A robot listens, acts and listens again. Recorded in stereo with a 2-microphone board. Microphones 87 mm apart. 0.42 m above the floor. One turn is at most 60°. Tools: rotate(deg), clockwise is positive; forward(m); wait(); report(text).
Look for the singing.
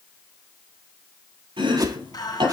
rotate(-50)
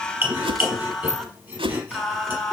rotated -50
report("Found it: singing, straight ahead.")